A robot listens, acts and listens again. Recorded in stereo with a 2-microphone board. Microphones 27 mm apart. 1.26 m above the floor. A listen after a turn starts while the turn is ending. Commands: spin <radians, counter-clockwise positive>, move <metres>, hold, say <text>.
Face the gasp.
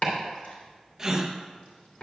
spin -0.44
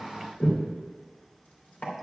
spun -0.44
hold
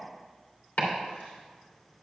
say I heard a gasp, but can't make it out now. It was about straight ahead or 130° right.